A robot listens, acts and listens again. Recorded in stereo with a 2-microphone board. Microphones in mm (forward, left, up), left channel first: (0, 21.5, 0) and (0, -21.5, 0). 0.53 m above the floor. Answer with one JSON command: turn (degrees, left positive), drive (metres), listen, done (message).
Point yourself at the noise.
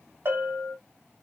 {"turn": -60}
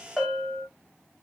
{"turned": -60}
{"done": "Found it: a bell, straight ahead, 2 to 4 m away."}